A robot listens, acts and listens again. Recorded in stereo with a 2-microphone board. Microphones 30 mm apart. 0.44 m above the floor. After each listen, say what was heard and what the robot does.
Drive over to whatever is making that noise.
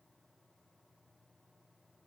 Keep listening.
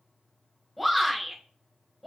Turn 30° left.
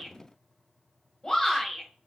So it is at 150° left. Turn 150° left.
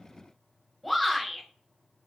Drive 1.0 m forward.
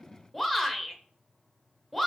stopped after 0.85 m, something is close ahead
I am next to the shout.